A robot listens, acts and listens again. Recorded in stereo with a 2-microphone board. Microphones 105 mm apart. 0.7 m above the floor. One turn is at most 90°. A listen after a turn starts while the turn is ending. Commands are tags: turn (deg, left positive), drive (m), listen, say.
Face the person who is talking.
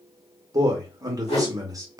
<turn deg="-35"/>
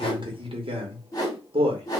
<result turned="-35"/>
<turn deg="-90"/>
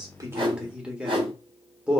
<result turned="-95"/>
<turn deg="-10"/>
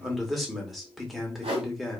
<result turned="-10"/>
<say>Found it: a man speaking, straight ahead.</say>